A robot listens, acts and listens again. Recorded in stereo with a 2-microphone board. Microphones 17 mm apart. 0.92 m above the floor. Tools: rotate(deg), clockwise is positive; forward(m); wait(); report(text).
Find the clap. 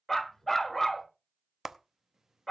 rotate(30)
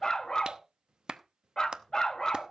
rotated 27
rotate(125)
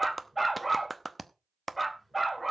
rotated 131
report("Facing the clap.")